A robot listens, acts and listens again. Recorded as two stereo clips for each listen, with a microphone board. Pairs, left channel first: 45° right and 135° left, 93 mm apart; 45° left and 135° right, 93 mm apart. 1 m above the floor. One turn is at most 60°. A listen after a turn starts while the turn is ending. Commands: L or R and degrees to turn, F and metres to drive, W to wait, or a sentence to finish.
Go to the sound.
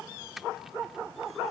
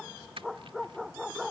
R60
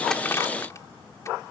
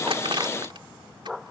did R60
R60
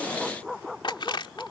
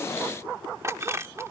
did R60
R60
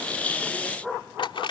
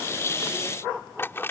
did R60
R20
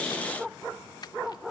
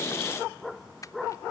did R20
F1.0
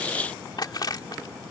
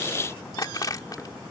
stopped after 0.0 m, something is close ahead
Blocked. The crushing is further on, straight ahead.